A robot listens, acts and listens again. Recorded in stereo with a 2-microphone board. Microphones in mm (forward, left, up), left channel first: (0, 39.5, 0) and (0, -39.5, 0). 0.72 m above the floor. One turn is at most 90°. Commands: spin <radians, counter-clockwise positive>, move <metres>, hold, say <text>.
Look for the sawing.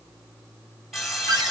spin -0.52
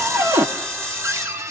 spin -1.57
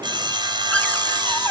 spin -1.31
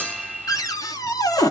spin 0.26
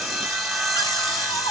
say Found it: sawing, straight ahead.